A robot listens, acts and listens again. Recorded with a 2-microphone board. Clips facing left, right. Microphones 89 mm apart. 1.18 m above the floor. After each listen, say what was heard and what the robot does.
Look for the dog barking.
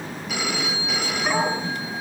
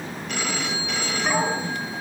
Turn 30° left.
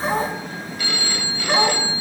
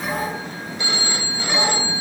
So it is at 145° left. Turn 145° left.
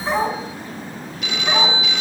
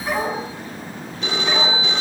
The dog barking is now 25° left. Turn 25° left.
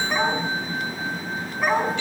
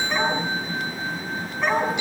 Found it: a dog barking, straight ahead, over 4 m away.